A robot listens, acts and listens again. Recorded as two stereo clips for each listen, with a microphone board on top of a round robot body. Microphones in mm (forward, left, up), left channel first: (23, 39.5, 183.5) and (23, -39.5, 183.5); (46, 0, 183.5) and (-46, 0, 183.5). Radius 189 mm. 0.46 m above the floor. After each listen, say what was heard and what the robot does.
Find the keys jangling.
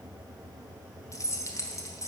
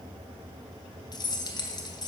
The keys jangling: 40° left. Turn 40° left.
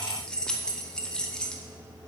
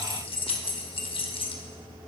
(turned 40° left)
The keys jangling is now 10° left. Turn 10° left.
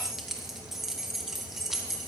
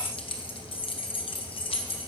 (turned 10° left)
Found it: keys jangling, straight ahead.